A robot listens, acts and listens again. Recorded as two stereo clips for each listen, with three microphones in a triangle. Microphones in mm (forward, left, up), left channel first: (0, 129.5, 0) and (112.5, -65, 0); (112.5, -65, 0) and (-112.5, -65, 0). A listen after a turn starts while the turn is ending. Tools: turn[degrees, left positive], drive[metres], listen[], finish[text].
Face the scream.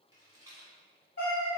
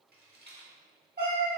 Action: listen[]
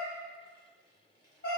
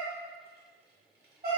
Action: listen[]
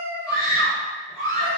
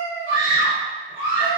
Thought: The scream: 175° right.
Action: turn[-175]
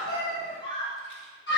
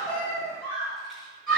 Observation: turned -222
Thought: The scream is now 50° left.
Action: turn[50]
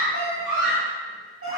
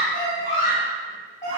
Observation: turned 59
Thought: The scream is now 10° right.
Action: turn[-10]
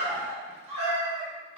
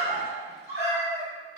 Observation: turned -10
Action: finish[Facing the scream.]